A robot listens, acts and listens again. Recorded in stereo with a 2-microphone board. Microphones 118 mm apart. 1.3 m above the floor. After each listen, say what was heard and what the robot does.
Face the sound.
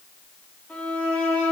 Turn 30° left.
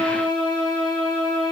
So it is at 135° left. Turn 135° left.
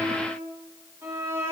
The violin is now 25° right. Turn 25° right.
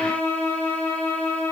The violin is now 10° left. Turn 10° left.
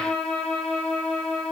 Facing the violin.